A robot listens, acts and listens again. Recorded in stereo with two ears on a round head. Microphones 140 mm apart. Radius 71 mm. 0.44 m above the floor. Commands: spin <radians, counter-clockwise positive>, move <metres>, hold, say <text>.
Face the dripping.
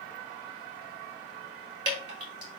spin -0.52
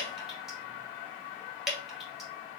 say Found it: dripping, straight ahead, 1 to 2 m away.